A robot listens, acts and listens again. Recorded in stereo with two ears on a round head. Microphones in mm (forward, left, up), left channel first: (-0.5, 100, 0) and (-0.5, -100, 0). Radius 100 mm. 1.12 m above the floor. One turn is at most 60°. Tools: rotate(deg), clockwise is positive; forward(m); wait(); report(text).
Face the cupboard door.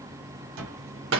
rotate(60)
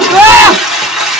wait()
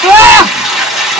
wait()
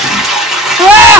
report("I heard a cupboard door, but can't make it out now. It was about straight ahead or 60° right.")